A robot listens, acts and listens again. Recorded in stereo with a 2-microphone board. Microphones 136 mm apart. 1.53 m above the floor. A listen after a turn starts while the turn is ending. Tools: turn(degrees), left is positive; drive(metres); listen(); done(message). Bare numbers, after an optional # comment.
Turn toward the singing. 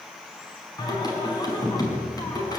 # The singing: about 30° left or 150° left.
turn(30)
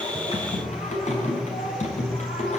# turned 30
# So it is at 120° left.
turn(120)
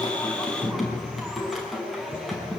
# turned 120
done("Found it: singing, straight ahead.")